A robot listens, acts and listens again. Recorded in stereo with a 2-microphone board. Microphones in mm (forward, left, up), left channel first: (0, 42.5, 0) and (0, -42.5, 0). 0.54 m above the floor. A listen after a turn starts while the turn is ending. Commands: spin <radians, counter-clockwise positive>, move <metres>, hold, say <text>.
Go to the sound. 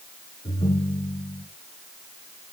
spin 1.57
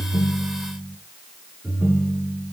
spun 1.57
spin -0.26
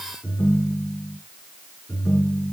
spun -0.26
move 1.0
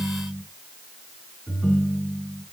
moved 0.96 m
move 1.0
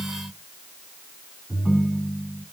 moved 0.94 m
move 1.0
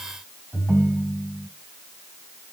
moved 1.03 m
move 1.0
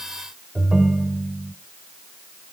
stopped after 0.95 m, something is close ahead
say Arrived at the ringtone, straight ahead.